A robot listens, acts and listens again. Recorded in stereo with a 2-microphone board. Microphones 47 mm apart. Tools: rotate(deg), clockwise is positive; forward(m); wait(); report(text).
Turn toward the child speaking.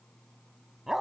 wait()
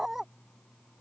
wait()
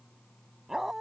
report("I can't make out a child speaking to turn to.")